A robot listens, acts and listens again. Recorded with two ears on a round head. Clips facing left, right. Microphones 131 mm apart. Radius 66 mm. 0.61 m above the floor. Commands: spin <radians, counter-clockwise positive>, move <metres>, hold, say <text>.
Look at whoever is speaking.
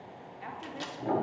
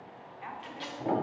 spin 0.79
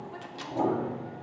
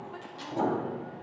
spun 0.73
hold
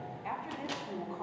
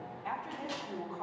spin 0.17
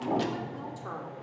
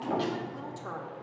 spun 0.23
say Facing the woman speaking.